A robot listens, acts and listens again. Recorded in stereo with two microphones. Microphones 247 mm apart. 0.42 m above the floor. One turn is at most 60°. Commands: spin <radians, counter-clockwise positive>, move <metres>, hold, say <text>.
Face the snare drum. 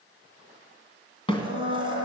spin 0.35
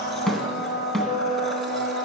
say Found it: a snare drum, straight ahead.